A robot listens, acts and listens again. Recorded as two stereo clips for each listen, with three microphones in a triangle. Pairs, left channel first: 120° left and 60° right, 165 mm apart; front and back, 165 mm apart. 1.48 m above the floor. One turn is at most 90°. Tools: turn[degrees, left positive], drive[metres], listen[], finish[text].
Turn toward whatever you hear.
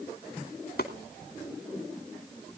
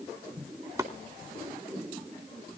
Thought: The chopping: 110° left.
Action: turn[90]
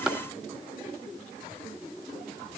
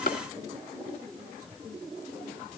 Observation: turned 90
Thought: The chopping is now 25° left.
Action: turn[25]
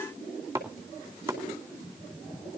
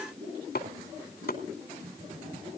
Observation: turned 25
Thought: The chopping is now 15° left.
Action: turn[15]
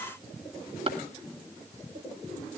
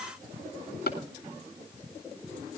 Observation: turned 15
Action: finish[Found it: chopping, straight ahead.]